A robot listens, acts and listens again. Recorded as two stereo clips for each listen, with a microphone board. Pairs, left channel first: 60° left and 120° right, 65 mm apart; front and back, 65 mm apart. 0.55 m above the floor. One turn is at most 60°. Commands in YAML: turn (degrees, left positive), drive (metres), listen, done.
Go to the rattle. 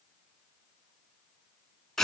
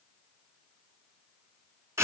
listen: true
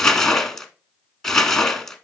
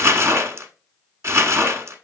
listen: true
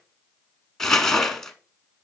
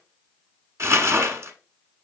done: "I can't make out a rattle to turn to."